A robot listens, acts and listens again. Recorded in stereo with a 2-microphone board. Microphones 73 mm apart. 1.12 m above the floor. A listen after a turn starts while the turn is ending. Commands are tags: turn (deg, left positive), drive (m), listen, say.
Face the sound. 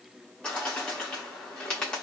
<turn deg="30"/>
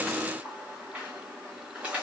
<turn deg="-20"/>
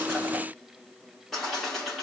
<say>Found it: a bird, straight ahead.</say>